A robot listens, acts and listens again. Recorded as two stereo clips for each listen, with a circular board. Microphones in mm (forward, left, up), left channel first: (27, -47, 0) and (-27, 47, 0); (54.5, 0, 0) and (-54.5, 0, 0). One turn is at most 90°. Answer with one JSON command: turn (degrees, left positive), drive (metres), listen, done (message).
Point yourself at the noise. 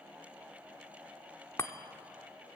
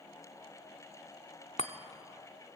{"done": "Found it: a chime, straight ahead, under 1 m away."}